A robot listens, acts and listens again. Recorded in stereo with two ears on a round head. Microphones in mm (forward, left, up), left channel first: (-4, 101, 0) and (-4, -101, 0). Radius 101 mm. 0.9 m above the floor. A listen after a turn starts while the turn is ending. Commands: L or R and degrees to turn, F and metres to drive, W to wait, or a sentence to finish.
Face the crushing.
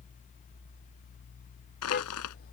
L90
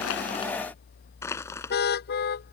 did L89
L10
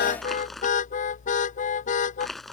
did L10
Found it: crushing, straight ahead.